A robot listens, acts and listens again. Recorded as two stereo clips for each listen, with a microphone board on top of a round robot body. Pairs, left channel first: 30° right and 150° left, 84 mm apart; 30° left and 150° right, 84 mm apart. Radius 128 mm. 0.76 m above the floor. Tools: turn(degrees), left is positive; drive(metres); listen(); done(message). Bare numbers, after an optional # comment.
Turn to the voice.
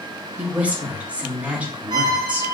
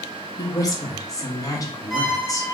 # The woman speaking: 75° left.
turn(75)
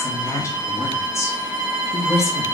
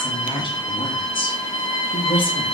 # The woman speaking is now 25° left.
turn(25)
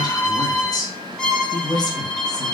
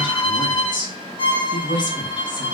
done("Found it: a woman speaking, straight ahead, 1 to 2 m away.")